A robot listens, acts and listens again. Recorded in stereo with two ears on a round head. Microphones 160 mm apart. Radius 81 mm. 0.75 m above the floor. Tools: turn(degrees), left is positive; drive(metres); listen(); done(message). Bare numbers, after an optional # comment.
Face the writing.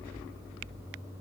listen()
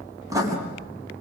# The writing: about 20° right or 160° right.
turn(-20)
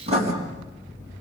# So it is at 140° right.
turn(-140)
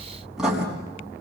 done("Facing the writing.")